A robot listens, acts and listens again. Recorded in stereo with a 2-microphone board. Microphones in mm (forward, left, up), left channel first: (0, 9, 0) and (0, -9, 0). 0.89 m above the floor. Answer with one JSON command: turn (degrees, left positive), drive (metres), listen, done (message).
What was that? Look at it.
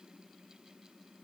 {"listen": true}
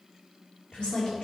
{"turn": 90}
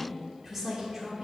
{"turn": -20}
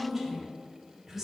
{"turn": -15}
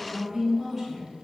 {"done": "Found it: a woman speaking, straight ahead, 2 to 4 m away."}